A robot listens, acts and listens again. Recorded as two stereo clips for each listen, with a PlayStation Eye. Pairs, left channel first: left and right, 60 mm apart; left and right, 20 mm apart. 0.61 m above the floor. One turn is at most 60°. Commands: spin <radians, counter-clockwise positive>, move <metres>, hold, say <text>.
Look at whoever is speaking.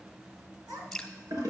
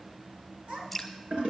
spin -1.05
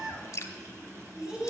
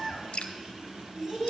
spin -0.26
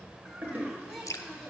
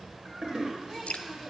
say Facing the child speaking, over 4 m away.